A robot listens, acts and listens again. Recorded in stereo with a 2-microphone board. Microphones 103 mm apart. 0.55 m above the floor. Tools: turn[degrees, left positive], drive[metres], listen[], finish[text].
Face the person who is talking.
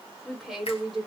Action: turn[30]
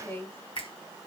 Thought: So it is at 150° left.
Action: turn[150]
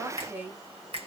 Thought: The woman speaking is now 25° right.
Action: turn[-25]
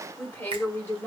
Thought: The woman speaking is now 20° left.
Action: turn[20]
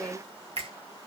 Action: finish[Found it: a woman speaking, straight ahead.]